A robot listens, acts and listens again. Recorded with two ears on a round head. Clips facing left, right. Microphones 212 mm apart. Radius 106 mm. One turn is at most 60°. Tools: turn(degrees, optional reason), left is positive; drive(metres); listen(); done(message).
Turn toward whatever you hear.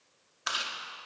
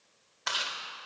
turn(degrees=30)
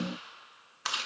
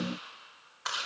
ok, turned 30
turn(degrees=60, reason="So it is at 135° left.")
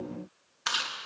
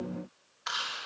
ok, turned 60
turn(degrees=60, reason="The chewing is now 75° left.")
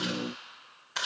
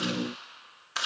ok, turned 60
turn(degrees=-10, reason="The chewing is now 10° right.")
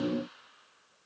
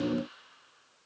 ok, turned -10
listen()
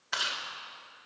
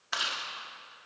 done("Facing the chewing, 2 to 4 m away.")